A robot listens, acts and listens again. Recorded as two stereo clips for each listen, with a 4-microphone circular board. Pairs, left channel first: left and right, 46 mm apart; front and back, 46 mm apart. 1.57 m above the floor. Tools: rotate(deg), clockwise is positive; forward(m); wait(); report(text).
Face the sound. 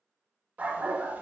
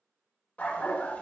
rotate(45)
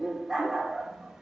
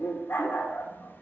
rotate(10)
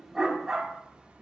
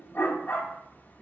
rotate(35)
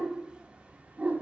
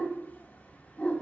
rotate(50)
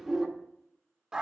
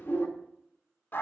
rotate(25)
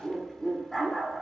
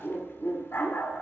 report("Facing the dog barking, 1 to 2 m away.")